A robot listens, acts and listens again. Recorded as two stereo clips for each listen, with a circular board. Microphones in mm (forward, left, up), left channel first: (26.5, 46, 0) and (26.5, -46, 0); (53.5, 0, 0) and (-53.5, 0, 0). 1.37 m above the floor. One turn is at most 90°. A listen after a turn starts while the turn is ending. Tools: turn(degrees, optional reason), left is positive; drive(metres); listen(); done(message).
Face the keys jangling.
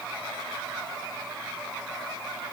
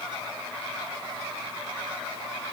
listen()
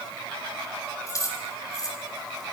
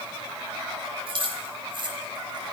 turn(degrees=90, reason="The keys jangling: 140° left.")
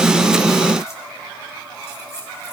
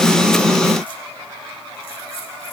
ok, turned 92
turn(degrees=45, reason="Nothing new. It was at 45° left.")
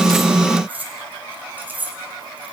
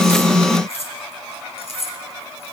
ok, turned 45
turn(degrees=-15, reason="The keys jangling is now 15° right.")
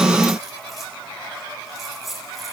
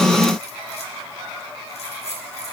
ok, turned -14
done("Found it: keys jangling, straight ahead.")